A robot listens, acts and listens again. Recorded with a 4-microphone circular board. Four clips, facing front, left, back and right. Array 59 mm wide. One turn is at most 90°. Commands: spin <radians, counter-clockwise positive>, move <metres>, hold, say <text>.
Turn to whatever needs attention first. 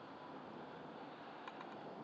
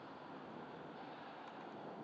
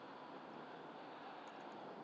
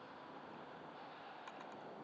hold
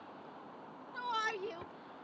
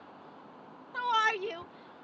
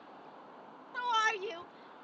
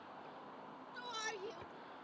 spin 1.57
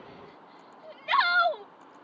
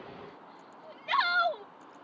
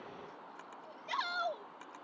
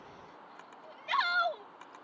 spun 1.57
spin 0.17
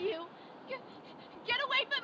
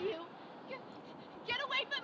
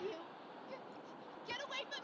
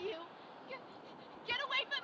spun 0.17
say Found it: a shout, straight ahead.